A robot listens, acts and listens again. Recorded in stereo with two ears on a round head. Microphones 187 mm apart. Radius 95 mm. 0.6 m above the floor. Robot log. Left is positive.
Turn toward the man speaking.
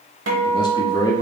note: The man speaking: about 20° left or 160° left.
cmd yaw +20
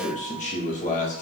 note: So it is at 135° left.
cmd yaw +135
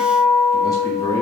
note: The man speaking is now 20° left.
cmd yaw +20
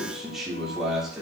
end: Facing the man speaking.